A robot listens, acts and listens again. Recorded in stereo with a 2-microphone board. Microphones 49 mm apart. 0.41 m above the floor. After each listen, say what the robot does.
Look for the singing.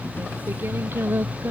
Turn 50° right.
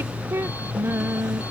Turn 65° right.
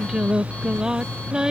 Turn 15° right.
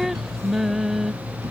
Facing the singing.